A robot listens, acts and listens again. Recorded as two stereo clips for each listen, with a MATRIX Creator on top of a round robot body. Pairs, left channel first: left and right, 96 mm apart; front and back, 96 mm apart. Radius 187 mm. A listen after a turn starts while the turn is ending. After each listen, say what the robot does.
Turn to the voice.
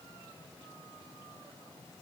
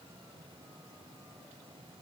Keep listening.
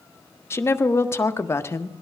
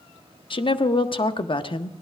Turn 25° left.
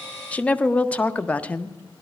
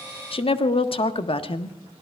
Turn 15° left.
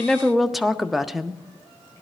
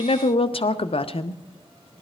Facing the woman speaking, 1 to 2 m away.